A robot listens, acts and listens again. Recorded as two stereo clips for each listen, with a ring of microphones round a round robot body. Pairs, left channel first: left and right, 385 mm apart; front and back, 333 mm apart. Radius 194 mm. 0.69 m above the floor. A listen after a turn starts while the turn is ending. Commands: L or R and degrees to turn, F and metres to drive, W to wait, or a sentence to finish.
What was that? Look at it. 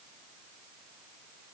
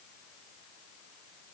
W
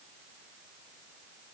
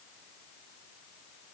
W
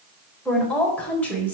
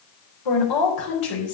Found it: a woman speaking, straight ahead.